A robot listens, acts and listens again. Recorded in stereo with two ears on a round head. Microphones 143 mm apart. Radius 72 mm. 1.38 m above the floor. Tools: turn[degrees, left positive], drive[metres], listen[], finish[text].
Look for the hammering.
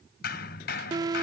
Thought: The hammering: about 65° left or 115° left.
Action: turn[65]
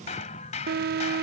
Thought: So it is at 45° left.
Action: turn[45]
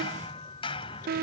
Thought: The hammering is now 35° left.
Action: turn[35]
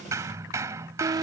Thought: The hammering is now 20° right.
Action: turn[-20]
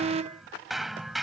Action: finish[Found it: hammering, straight ahead.]